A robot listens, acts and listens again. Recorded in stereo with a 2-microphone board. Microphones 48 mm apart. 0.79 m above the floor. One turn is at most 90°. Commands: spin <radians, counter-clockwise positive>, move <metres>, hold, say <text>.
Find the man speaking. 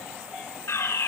hold
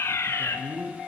spin -1.22
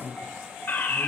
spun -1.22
say Found it: a man speaking, straight ahead.